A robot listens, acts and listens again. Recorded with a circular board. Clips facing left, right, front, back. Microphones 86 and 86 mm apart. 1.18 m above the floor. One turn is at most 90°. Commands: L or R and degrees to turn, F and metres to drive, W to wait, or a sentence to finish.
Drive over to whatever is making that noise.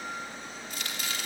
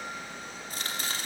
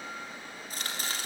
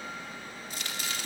R45
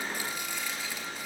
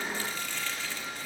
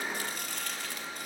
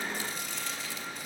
L15
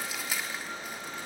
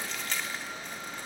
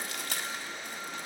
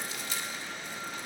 L10
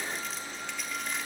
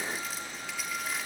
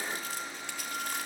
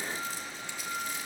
F1.0
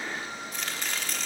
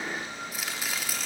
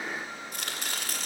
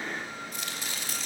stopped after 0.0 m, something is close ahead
Blocked. The chopping is further on, straight ahead.